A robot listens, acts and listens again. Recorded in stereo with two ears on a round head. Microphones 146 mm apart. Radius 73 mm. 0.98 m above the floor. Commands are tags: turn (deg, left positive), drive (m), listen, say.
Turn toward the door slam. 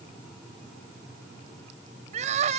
<listen/>
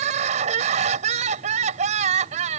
<listen/>
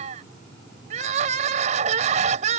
<say>I can't make out a door slam to turn to.</say>